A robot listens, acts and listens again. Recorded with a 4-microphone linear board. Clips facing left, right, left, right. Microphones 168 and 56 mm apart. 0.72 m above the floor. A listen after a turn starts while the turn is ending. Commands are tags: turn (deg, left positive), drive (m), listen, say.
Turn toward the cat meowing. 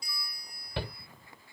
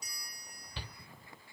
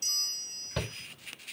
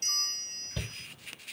<listen/>
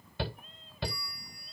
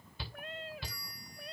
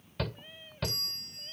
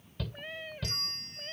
<turn deg="-90"/>
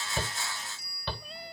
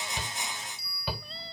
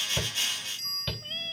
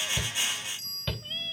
<listen/>
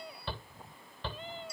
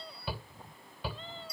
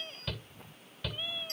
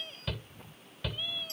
<turn deg="15"/>
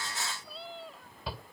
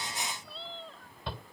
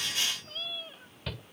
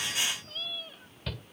<turn deg="10"/>
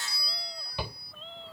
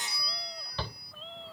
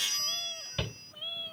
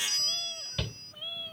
<say>Facing the cat meowing.</say>